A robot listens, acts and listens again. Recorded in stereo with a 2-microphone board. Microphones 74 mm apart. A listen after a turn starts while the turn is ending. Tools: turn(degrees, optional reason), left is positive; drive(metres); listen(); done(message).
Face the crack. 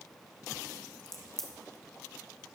turn(degrees=30)
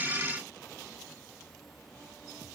listen()
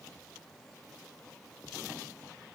done("I heard a crack, but can't make it out now. It was about 25° right or 145° left.")